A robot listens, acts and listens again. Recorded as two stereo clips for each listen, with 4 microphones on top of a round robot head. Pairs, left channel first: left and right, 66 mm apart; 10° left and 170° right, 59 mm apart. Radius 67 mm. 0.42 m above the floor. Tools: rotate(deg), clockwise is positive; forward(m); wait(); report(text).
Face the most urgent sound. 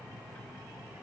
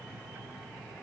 wait()
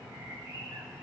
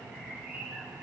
wait()
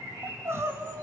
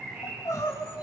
rotate(40)
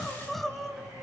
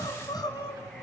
report("Found it: crying, straight ahead, 1 to 2 m away.")